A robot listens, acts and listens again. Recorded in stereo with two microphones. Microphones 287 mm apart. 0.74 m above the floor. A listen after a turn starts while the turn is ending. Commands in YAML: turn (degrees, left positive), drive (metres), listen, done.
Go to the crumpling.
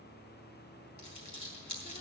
turn: 90
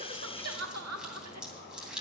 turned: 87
drive: 1.0
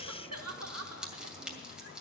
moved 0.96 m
drive: 1.0
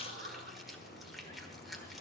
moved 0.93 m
listen: true
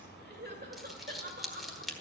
drive: 1.0
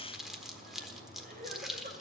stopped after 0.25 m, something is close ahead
done: "Arrived at the crumpling, straight ahead."